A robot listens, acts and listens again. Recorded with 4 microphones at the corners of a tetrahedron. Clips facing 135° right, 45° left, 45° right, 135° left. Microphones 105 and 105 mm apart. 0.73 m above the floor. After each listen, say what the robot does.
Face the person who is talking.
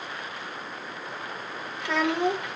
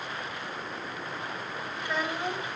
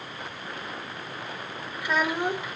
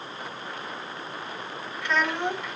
Turn 125° right.
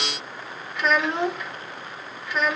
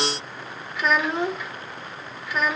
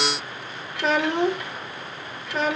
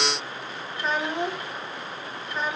Turn 45° right.
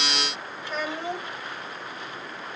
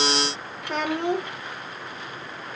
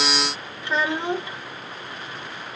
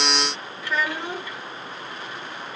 Turn 20° left.
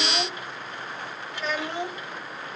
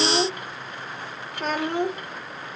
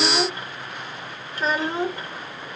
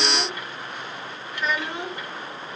Turn 10° left.
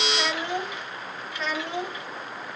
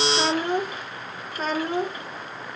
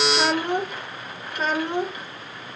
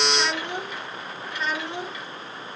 Facing the child speaking.